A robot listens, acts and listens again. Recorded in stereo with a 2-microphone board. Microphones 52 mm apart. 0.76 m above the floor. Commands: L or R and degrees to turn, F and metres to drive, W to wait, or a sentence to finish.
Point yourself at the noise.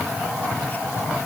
W
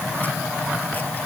W
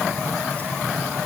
I can't make out anything to turn to.